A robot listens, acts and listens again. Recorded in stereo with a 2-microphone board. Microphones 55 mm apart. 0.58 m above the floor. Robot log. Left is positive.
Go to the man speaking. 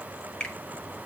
cmd idle
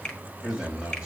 note: The man speaking: about 20° right or 160° right.
cmd yaw -20
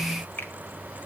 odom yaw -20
cmd idle
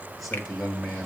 cmd fwd 1.0
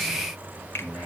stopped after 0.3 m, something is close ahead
end: Something is in my way. I am facing the man speaking but have not reached it.